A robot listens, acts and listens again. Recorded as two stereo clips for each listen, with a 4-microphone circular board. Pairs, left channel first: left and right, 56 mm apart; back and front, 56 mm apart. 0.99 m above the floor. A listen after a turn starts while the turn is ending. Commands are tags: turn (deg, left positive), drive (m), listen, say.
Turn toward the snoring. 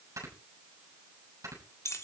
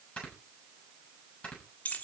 <turn deg="-110"/>
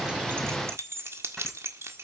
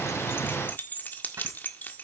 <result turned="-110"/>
<listen/>
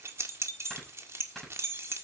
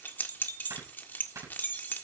<say>Found it: snoring, straight ahead, over 4 m away.</say>